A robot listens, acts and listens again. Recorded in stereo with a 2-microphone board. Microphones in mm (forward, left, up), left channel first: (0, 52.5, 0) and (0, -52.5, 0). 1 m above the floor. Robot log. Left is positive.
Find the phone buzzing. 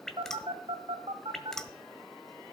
note: The phone buzzing: about 65° right or 115° right.
cmd yaw -65
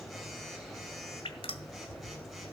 end: Found it: a phone buzzing, straight ahead, 2 to 4 m away.